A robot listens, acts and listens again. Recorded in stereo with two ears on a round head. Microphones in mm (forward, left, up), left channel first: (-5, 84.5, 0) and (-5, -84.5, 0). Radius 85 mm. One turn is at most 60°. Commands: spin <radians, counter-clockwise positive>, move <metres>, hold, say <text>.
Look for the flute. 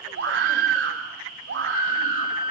spin 0.79
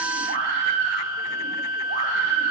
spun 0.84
spin 1.05
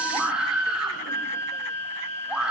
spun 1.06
spin 0.26
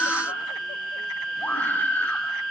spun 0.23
say Found it: a flute, straight ahead, 1 to 2 m away.